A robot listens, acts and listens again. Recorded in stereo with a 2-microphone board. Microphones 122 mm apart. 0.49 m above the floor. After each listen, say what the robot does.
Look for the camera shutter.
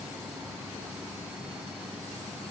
Keep listening.
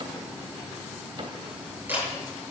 Turn 15° right.
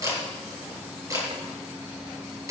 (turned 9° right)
Turn 25° right.
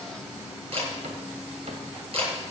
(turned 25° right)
Turn 130° right.
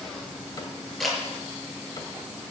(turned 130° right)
Found it: a camera shutter, straight ahead.